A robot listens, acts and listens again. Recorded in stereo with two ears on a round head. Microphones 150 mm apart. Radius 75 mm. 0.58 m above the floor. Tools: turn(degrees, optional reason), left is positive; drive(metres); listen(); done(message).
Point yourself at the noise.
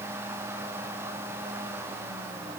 listen()
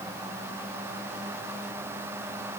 listen()
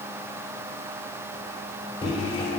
turn(degrees=35, reason="The microwave: about 35° left or 145° left.")
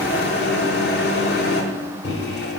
turn(degrees=110, reason="So it is at 110° left.")
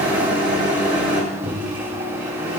turn(degrees=-10, reason="The microwave is now 10° right.")
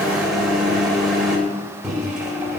done("Found it: a microwave, straight ahead, 1 to 2 m away.")